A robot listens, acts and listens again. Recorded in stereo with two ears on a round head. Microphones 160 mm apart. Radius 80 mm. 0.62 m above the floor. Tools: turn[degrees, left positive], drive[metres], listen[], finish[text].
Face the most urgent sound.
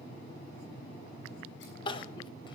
Thought: The crying: about 25° left or 155° left.
Action: turn[25]
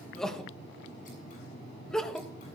Action: finish[Found it: crying, straight ahead.]